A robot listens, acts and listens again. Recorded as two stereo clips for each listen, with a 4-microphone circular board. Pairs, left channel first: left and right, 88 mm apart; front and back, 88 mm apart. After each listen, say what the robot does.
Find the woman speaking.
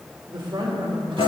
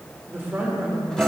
Turn 110° right.
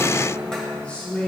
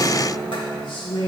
Turn 20° left.
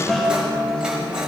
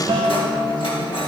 Keep listening.
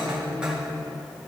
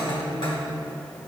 Turn 20° left.
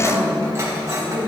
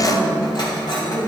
Turn 10° left.
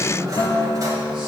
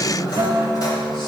Facing the woman speaking.